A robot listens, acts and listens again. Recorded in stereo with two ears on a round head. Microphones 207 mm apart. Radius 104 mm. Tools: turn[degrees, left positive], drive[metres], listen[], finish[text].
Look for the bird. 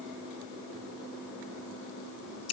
Action: listen[]
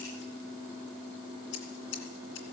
Action: listen[]
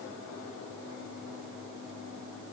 Action: finish[I can't make out a bird to turn to.]